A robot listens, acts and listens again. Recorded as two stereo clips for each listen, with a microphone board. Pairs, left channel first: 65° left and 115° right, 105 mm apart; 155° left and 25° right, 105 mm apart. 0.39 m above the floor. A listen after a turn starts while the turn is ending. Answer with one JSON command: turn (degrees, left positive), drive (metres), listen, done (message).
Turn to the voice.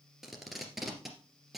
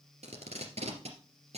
{"listen": true}
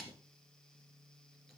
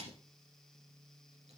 {"listen": true}
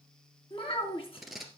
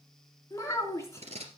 {"turn": 95}
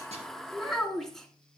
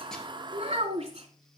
{"turn": -20}
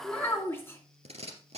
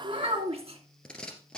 {"done": "Found it: a child speaking, straight ahead."}